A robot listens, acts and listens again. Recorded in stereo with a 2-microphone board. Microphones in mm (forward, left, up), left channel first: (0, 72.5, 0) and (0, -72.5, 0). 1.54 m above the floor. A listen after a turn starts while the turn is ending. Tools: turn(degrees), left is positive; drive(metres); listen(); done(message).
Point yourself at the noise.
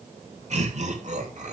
turn(degrees=-60)
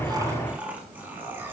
turn(degrees=-15)
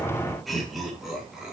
done("Found it: laughter, straight ahead, over 4 m away.")